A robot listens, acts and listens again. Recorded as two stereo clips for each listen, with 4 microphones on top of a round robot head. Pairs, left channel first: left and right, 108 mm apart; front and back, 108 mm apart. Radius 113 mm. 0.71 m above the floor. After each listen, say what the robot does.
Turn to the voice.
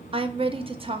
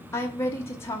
Turn 65° right.
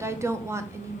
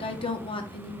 Turn 25° right.
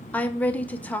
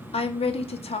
Turn 15° left.
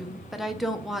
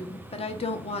Facing the woman speaking.